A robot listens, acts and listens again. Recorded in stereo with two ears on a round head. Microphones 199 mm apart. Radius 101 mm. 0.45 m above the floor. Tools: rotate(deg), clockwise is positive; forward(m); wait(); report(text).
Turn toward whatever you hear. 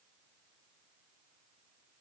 wait()
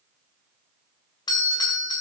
rotate(-20)
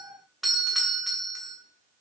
report("Facing the doorbell.")